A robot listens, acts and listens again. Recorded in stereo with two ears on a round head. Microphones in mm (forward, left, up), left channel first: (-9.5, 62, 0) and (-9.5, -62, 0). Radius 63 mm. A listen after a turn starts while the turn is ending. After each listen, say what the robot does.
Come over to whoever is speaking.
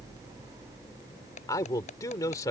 Turn 25° left.
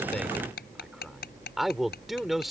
Drive 1.0 m forward.
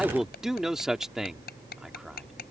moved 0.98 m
Drive 1.0 m forward.
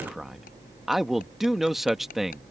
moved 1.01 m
Drive 1.0 m forward.
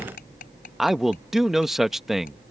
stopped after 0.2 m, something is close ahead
Arrived at the man speaking, straight ahead.